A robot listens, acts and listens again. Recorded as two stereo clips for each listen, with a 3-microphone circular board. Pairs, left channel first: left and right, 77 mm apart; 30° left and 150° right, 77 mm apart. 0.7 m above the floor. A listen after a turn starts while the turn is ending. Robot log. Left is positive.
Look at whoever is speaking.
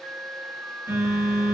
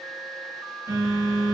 cmd idle
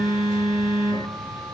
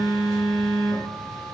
cmd idle
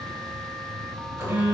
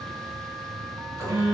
end: I can't make out anyone speaking, only a phone buzzing.